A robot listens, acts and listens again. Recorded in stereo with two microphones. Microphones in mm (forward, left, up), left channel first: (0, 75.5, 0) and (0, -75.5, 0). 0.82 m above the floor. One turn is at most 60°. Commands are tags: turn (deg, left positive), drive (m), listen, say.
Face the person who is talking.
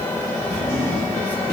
<listen/>
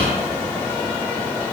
<listen/>
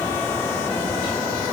<say>I can't make out anyone speaking to turn to.</say>